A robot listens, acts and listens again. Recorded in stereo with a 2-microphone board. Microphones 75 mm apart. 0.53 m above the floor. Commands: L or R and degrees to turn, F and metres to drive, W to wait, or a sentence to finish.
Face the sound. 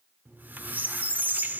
R25
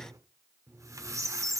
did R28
R125
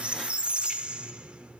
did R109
R15
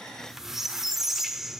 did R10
Found it: a squeak, straight ahead, under 1 m away.